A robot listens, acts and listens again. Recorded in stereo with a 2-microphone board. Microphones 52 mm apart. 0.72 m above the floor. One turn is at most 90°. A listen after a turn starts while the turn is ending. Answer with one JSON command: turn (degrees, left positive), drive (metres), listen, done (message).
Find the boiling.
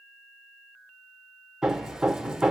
{"listen": true}
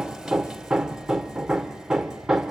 {"listen": true}
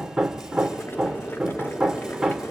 {"turn": 45}
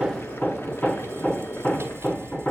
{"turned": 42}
{"listen": true}
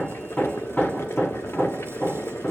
{"turn": 80}
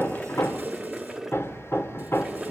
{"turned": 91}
{"turn": -10}
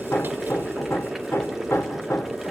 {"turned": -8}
{"done": "Found it: boiling, straight ahead."}